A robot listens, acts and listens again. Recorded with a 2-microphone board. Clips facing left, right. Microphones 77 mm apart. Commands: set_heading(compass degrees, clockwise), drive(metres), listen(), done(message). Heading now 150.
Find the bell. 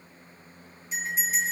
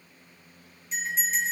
set_heading(120)
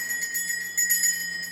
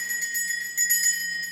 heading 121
set_heading(336)
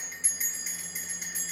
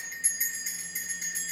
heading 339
done("Facing the bell.")